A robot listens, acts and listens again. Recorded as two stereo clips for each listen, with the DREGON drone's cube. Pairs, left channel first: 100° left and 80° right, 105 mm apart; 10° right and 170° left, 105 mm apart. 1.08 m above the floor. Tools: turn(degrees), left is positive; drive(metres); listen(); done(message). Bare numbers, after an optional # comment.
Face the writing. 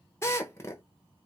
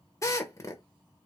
listen()
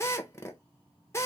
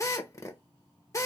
listen()
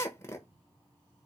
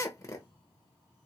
done("I can't make out writing to turn to.")